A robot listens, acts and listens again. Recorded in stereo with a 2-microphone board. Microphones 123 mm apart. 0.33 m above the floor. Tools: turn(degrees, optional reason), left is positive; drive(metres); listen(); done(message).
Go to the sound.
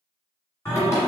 turn(degrees=25, reason="The singing: about 25° left or 155° left.")
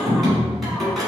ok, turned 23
drive(metres=1.0)
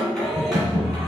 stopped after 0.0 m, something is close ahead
done("Blocked. The singing is further on, straight ahead.")